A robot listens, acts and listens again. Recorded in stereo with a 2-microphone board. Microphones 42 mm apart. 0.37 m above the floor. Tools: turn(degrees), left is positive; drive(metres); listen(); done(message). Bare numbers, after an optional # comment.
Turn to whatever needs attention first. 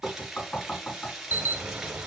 # The alarm: about 55° right or 125° right.
turn(-55)
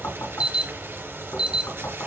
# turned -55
# So it is at 30° right.
turn(-30)
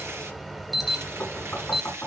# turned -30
done("Facing the alarm.")